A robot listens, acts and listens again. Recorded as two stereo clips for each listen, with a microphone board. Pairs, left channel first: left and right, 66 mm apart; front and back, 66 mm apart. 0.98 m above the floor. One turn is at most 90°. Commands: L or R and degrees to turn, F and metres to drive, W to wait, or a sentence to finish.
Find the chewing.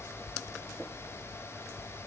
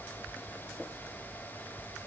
W
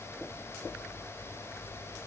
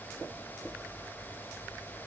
W
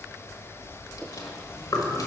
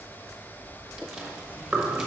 L90
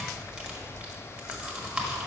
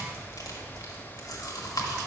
R20
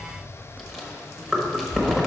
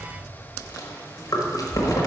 Facing the chewing, 1 to 2 m away.